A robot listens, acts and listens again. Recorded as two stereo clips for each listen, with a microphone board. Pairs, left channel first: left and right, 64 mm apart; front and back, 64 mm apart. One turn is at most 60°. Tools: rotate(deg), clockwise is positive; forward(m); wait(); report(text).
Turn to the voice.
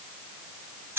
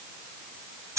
wait()
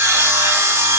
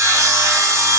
wait()
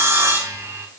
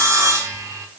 report("I can't make out anyone speaking to turn to.")